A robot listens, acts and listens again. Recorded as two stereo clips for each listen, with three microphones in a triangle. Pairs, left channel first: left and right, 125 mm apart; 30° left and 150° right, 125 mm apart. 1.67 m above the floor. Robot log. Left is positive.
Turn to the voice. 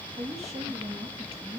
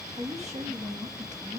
note: The woman speaking: 130° right.
cmd yaw -130
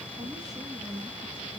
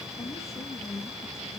note: The woman speaking is now 40° right.
cmd yaw -40
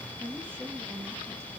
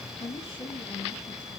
note: The woman speaking is now 20° right.
cmd yaw -20
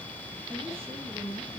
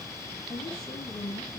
note: The woman speaking is now 20° right.
cmd yaw -20
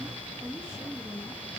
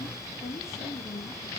end: Found it: a woman speaking, straight ahead.